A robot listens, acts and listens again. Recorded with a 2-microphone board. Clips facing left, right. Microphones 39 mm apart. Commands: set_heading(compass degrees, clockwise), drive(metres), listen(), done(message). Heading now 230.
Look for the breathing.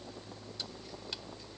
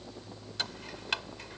listen()
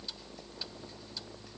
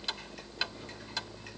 listen()
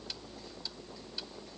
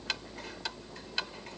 done("I can't make out breathing, only ticking.")